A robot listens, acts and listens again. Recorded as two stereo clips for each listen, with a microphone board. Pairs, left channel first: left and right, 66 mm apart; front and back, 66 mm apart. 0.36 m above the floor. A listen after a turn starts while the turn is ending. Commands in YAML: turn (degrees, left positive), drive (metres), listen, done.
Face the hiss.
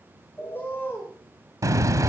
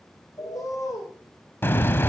turn: -55
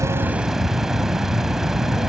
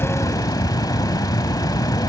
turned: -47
done: "Found it: a hiss, straight ahead, under 1 m away."